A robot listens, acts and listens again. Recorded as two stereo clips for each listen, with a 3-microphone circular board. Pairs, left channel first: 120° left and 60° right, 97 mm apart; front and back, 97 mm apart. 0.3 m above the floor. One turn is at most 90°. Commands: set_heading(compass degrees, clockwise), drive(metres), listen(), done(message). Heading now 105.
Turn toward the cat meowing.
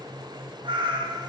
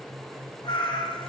set_heading(125)
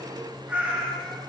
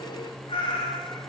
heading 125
set_heading(100)
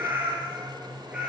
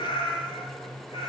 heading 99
set_heading(79)
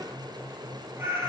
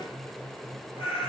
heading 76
set_heading(66)
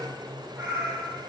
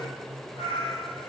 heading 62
done("Facing the cat meowing, 2 to 4 m away.")